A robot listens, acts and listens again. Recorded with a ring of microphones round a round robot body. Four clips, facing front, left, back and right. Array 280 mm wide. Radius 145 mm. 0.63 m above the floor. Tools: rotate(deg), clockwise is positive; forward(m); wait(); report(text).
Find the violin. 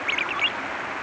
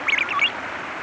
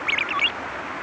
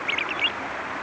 wait()
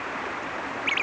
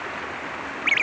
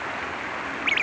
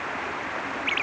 wait()
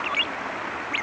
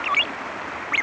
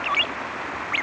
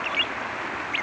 report("I can't make out a violin, only a ringtone.")